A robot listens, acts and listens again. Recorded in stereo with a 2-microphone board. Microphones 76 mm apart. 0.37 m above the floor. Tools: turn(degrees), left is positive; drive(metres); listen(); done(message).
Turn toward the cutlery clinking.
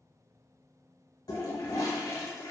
listen()
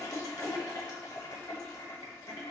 listen()
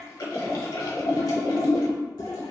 done("I can't make out cutlery clinking, only a toilet flushing.")